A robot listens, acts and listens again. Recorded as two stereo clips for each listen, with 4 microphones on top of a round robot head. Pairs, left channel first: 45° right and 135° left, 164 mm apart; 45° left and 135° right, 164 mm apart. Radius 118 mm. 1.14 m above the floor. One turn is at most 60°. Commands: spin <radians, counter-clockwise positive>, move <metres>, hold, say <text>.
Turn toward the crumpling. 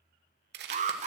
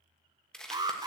spin 1.05
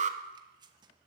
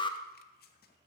spin 1.05
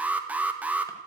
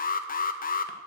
spin 0.26
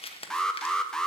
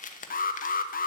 say Found it: crumpling, straight ahead, 1 to 2 m away.